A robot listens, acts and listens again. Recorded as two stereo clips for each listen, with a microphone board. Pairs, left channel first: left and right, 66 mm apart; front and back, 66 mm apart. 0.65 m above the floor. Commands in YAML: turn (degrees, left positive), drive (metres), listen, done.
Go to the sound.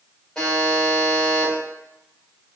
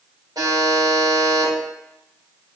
turn: 175
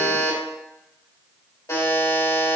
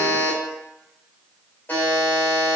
turn: 55
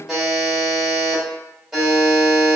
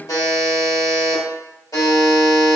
drive: 1.0
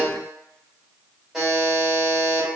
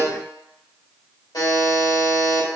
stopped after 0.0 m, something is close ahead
done: "Something is in my way. I am facing the buzzer but have not reached it."